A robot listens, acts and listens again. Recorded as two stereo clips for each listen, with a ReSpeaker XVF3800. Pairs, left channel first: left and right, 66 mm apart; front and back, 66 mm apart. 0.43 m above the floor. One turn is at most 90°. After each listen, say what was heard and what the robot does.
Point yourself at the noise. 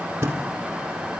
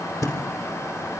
The thud: 35° right. Turn 35° right.
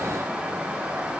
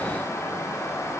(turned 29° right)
Nothing new. It was at 10° right. Turn 10° right.
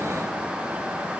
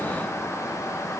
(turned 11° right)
Facing where the thud came from. I can't hear it now.